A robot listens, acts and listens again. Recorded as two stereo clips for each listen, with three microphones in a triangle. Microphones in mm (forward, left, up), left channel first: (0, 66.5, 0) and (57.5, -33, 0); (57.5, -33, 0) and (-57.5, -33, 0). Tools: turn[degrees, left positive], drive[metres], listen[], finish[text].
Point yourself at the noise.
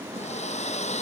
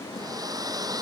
Thought: The hair dryer: 125° left.
Action: turn[125]
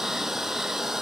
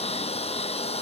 Thought: The hair dryer is now 25° left.
Action: turn[25]
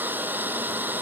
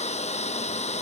Thought: The hair dryer is now 15° left.
Action: turn[15]
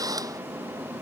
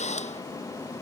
Action: finish[Found it: a hair dryer, straight ahead.]